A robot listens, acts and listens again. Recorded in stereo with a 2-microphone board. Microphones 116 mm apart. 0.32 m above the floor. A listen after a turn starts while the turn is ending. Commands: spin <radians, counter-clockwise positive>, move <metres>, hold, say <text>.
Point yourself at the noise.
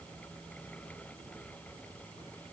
hold
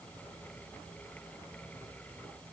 hold
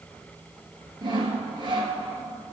spin -0.70
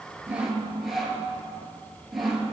say Found it: sawing, straight ahead, 1 to 2 m away.